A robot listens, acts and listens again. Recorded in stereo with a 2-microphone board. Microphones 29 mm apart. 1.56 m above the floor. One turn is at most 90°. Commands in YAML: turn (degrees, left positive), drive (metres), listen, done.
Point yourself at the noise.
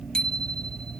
turn: 30
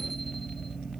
listen: true
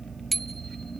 done: "Found it: a bicycle bell, straight ahead."